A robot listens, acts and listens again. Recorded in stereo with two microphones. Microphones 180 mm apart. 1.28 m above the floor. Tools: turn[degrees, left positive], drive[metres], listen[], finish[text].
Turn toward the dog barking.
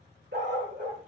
Thought: The dog barking: about 75° right or 105° right.
Action: turn[-75]
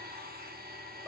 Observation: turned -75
Action: listen[]
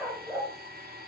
Thought: So it is at 10° right.
Action: turn[-10]
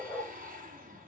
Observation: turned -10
Action: finish[Facing the dog barking, 2 to 4 m away.]